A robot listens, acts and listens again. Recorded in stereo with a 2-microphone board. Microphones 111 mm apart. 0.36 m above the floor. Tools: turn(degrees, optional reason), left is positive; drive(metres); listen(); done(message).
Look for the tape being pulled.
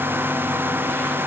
listen()
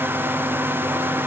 listen()
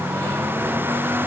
done("I can't make out tape being pulled.")